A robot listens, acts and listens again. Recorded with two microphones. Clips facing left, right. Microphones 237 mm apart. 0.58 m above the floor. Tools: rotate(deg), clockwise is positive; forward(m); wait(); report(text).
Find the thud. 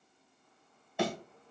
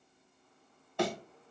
rotate(-30)
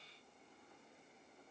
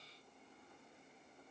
wait()
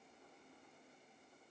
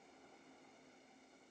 report("I heard a thud, but can't make it out now. It was about 20° right or 140° left.")